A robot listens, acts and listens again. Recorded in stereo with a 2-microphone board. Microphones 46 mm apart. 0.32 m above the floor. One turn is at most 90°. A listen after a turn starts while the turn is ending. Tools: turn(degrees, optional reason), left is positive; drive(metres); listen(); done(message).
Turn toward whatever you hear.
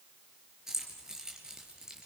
turn(degrees=-30)
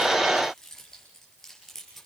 turn(degrees=10, reason="So it is at 10° left.")
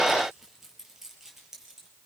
done("Facing the keys jangling.")